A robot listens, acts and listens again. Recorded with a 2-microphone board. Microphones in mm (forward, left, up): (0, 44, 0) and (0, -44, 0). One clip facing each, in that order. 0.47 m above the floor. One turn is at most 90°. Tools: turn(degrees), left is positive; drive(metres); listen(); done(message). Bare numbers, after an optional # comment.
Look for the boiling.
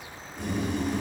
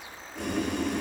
turn(-90)
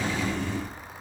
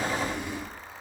# So it is at 15° right.
turn(-15)
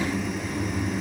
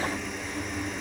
done("Facing the boiling, over 4 m away.")